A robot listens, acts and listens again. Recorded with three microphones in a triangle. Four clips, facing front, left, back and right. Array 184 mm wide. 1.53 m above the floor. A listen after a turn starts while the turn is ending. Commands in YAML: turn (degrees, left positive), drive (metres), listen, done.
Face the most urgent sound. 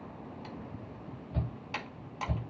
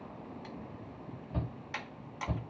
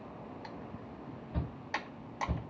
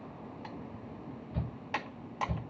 turn: 105
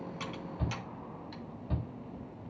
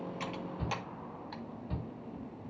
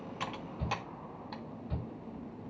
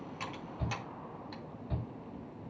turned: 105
done: "Found it: a shout, straight ahead, 2 to 4 m away."